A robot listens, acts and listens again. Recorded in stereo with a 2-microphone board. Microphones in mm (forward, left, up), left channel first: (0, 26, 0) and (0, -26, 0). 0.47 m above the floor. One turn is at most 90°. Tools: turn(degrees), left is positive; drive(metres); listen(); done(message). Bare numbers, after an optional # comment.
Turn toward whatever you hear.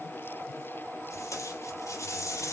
turn(90)
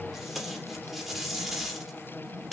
# So it is at 10° right.
turn(-10)
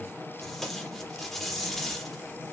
done("Facing the tape being pulled, over 4 m away.")